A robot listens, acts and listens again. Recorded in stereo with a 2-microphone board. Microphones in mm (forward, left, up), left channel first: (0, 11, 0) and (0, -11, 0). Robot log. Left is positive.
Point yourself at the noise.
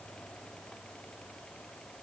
cmd idle
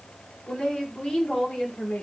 note: The woman speaking: about 50° left or 130° left.
cmd yaw +50
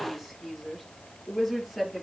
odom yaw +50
end: Facing the woman speaking.